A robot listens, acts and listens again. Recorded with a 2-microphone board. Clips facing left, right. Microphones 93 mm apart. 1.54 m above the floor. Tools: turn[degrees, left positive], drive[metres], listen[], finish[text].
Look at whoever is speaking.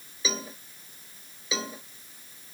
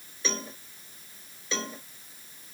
Action: listen[]
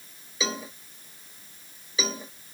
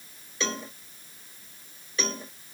Action: listen[]
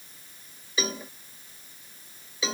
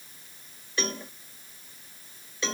Action: finish[I can't make out anyone speaking, only a cowbell.]